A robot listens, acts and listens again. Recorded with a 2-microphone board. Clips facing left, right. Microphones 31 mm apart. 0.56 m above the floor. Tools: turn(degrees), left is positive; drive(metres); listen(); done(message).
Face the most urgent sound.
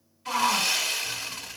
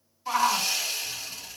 turn(degrees=-25)
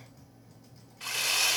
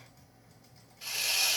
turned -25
listen()
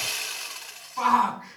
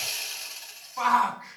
done("Found it: a shout, straight ahead.")